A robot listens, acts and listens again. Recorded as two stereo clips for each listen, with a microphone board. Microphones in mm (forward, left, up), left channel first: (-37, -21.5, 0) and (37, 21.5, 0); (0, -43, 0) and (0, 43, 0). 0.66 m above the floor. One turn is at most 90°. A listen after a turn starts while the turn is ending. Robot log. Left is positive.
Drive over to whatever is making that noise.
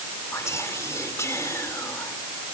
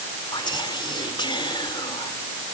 note: The whispering: 100° right.
cmd yaw -90
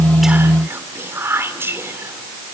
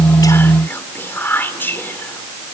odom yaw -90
note: The whispering is now 25° right.
cmd yaw -25
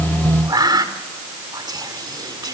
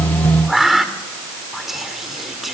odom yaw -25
cmd fwd 1.0
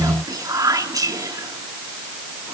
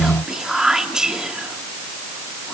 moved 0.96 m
note: The whispering is now 10° left.
cmd yaw +10
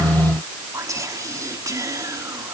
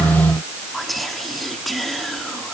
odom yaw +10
cmd fwd 1.0
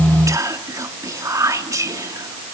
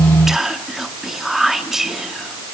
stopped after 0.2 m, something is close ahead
end: I am next to the whispering.